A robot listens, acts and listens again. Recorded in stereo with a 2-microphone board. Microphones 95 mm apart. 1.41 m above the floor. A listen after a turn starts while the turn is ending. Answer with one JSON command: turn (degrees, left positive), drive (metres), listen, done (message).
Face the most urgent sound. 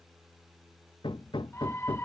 {"turn": 25}
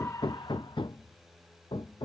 {"listen": true}
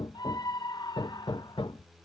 {"turn": 130}
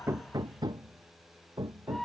{"done": "Found it: a scream, straight ahead."}